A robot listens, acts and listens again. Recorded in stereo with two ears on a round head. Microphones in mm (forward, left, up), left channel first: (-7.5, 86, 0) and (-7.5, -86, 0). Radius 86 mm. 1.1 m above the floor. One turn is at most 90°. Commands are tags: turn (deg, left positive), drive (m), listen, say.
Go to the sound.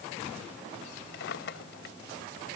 <turn deg="55"/>
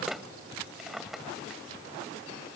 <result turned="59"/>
<drive m="1.0"/>
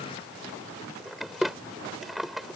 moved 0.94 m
<drive m="1.0"/>
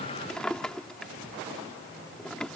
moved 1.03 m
<drive m="1.0"/>
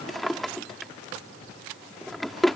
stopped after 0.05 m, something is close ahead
<say>I am next to the drawer.</say>